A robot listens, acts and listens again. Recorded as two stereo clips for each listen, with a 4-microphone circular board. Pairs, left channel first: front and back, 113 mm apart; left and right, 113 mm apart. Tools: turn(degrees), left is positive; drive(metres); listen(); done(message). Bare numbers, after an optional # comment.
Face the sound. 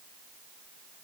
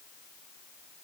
listen()
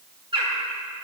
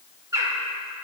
# The bird: 145° right.
turn(-145)
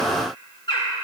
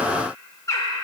# The bird is now 35° left.
turn(35)
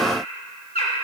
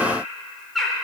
done("Facing the bird.")